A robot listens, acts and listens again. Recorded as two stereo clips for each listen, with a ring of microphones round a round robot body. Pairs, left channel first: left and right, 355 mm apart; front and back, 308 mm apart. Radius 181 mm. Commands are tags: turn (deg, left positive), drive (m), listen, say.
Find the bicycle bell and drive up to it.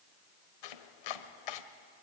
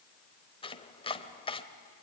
<listen/>
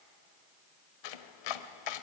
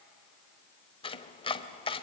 <listen/>
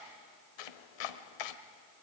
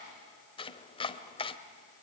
<say>I can't make out a bicycle bell, only chopping.</say>